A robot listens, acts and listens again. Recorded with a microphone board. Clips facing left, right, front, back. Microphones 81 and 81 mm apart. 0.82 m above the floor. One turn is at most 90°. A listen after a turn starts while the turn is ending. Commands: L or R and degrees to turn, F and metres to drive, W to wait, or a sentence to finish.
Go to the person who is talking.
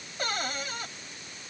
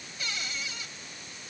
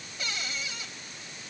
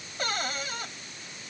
W
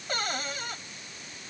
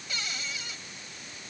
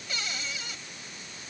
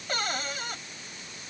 W
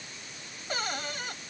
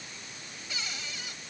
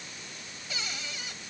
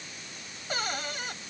I can't make out anyone speaking, only a cupboard door.